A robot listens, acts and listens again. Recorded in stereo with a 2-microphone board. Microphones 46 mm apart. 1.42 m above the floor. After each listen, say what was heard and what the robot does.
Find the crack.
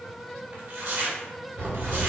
The crack: about 70° right or 110° right. Turn 70° right.
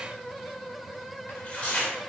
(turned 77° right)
Keep listening.
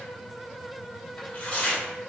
I heard a crack, but can't make it out now. It was about 10° left or 35° right.